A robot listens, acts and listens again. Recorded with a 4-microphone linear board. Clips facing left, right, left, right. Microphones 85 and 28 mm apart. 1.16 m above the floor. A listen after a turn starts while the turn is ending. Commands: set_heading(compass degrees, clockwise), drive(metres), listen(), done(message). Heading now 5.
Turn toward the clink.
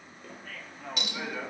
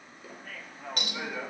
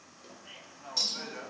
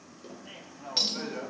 set_heading(55)
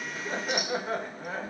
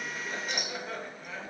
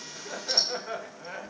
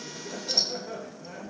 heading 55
done("Facing the clink, 1 to 2 m away.")